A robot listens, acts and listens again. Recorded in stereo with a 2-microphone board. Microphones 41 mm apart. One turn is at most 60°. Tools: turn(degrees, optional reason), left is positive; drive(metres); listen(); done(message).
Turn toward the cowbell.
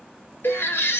turn(degrees=60, reason="The cowbell: about 60° left or 120° left.")
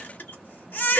listen()
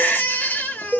done("Facing the cowbell.")